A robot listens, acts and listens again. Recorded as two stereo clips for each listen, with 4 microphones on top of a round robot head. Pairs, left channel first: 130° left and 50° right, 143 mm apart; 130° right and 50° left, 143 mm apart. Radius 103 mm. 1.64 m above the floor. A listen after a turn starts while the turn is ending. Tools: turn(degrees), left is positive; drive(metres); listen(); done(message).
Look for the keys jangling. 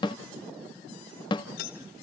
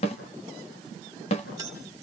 turn(degrees=120)
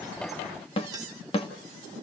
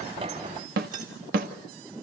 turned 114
listen()
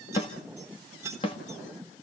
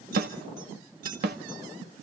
turn(degrees=20)
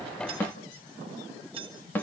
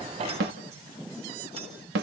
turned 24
done("Facing the keys jangling.")